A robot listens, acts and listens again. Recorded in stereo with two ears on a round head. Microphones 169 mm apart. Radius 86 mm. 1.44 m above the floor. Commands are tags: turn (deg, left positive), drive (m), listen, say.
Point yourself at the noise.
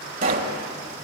<turn deg="-50"/>
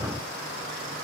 <listen/>
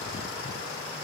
<say>I heard a pop, but can't make it out now. It was about straight ahead or 80° right.</say>